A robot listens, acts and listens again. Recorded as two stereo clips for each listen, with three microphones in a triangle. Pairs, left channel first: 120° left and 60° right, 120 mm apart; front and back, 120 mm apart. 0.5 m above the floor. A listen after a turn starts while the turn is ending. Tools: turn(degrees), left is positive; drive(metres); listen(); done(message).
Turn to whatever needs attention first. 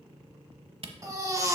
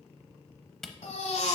done("Found it: a baby crying, straight ahead, 1 to 2 m away.")